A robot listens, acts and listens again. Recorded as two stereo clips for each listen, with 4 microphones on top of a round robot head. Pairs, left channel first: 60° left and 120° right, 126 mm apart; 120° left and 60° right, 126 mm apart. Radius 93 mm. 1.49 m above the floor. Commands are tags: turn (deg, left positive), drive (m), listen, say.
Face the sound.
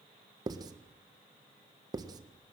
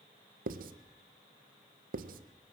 <turn deg="-60"/>
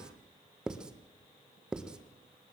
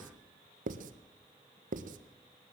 <turn deg="-40"/>
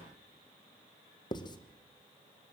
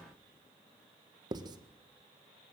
<say>Facing the writing.</say>